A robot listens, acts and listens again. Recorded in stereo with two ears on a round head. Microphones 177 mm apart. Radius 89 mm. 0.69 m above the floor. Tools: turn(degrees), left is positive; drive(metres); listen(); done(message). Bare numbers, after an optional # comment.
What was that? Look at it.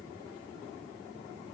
listen()
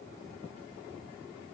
listen()
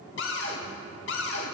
# The cupboard door: about 60° left or 120° left.
turn(60)
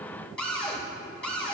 done("Facing the cupboard door.")